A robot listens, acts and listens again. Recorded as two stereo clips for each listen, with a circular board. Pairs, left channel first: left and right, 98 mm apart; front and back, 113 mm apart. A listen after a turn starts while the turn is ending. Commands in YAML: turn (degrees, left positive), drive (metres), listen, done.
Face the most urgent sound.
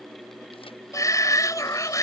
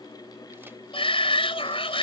turn: 35
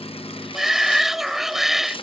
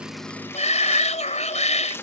done: "Found it: a shout, straight ahead."